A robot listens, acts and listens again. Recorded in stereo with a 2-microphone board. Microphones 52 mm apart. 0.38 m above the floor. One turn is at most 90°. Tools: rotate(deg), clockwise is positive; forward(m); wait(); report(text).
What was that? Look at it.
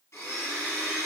rotate(-75)
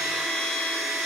report("Facing the blender, 1 to 2 m away.")